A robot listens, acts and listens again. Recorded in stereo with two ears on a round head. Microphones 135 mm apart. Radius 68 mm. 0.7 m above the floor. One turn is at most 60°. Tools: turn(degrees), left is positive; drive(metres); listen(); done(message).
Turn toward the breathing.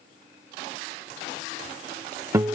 listen()
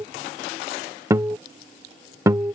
listen()
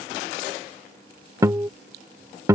done("I can't make out breathing, only a guitar.")